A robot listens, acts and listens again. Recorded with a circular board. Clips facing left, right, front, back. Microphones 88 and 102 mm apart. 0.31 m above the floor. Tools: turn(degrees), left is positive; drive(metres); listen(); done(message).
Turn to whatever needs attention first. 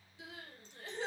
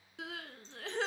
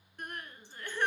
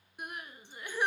turn(degrees=-100)
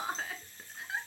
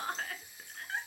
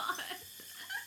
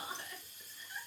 done("Found it: crying, straight ahead, under 1 m away.")